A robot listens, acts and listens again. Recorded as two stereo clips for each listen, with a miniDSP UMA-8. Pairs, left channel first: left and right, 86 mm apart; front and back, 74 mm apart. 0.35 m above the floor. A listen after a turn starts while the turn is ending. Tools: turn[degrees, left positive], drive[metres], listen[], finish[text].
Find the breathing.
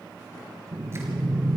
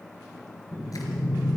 Thought: The breathing: 150° right.
Action: turn[-150]
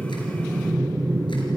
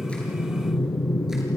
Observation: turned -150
Thought: The breathing is now 20° right.
Action: turn[-20]
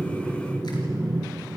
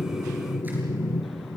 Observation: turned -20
Action: finish[Found it: breathing, straight ahead.]